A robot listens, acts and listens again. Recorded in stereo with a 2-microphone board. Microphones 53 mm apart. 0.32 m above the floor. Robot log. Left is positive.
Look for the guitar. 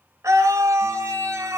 cmd idle
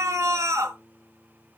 cmd yaw +30
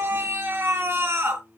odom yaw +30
note: So it is at 150° left.
cmd yaw +150
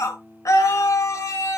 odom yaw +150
end: Found it: a guitar, straight ahead, over 4 m away.